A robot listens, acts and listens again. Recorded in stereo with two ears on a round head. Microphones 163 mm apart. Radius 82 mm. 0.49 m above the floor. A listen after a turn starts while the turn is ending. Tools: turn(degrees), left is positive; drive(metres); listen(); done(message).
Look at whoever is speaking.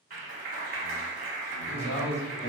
turn(degrees=35)
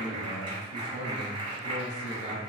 turn(degrees=105)
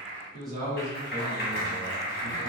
done("Found it: a man speaking, straight ahead, 1 to 2 m away.")